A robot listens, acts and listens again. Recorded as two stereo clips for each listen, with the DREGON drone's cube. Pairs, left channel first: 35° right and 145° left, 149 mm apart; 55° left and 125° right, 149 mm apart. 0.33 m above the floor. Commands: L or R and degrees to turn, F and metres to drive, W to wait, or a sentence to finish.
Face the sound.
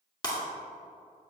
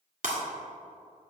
R95
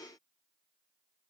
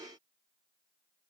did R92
I heard breaking glass from this way, but can't make it out now.